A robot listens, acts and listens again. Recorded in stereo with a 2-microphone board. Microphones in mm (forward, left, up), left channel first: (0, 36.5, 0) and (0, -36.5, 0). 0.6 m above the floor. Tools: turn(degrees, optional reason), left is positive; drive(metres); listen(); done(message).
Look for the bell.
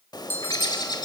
turn(degrees=25, reason="The bell: about 25° left or 155° left.")
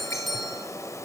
done("Found it: a bell, straight ahead, 2 to 4 m away.")